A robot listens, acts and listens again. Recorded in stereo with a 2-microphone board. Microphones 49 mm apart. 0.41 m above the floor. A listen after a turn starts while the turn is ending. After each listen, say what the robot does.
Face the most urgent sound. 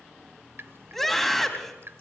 Turn 30° left.
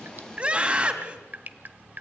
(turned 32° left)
Turn 30° right.
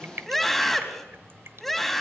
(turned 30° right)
Found it: a scream, straight ahead.